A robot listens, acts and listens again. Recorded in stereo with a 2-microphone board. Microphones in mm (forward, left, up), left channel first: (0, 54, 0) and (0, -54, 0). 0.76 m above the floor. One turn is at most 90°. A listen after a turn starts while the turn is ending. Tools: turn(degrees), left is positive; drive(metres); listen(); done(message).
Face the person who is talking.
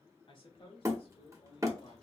turn(degrees=55)
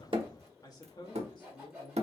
turn(degrees=50)
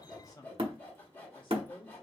turn(degrees=50)
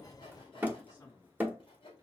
turn(degrees=30)
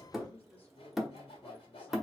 turn(degrees=15)
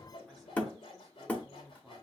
done("Facing the man speaking, 1 to 2 m away.")